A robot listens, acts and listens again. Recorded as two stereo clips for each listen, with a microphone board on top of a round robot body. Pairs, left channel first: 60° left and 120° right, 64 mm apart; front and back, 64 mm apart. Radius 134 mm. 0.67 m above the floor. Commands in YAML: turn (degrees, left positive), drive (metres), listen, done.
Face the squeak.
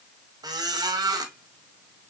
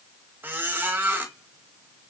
turn: -120
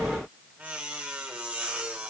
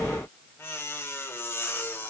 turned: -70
turn: -50
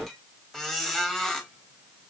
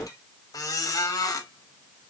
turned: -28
turn: -25
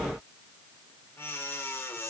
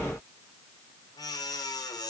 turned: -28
done: "Facing the squeak."